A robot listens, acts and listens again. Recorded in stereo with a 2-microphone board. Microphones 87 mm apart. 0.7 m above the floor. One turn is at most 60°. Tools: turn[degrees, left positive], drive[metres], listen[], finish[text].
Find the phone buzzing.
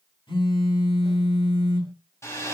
Action: turn[60]
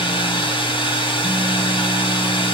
Thought: Nothing new. It was at 30° left.
Action: turn[30]
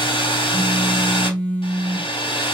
Thought: The phone buzzing is now 15° left.
Action: turn[15]
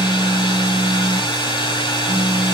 Action: finish[Found it: a phone buzzing, straight ahead, 1 to 2 m away.]